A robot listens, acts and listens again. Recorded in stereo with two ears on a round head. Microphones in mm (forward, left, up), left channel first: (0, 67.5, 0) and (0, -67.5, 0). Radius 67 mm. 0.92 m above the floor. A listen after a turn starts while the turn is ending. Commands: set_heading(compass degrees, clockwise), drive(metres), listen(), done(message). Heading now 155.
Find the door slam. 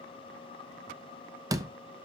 set_heading(175)
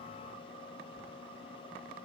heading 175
listen()
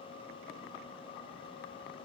done("I heard a door slam, but can't make it out now. It was about straight ahead or 140° right.")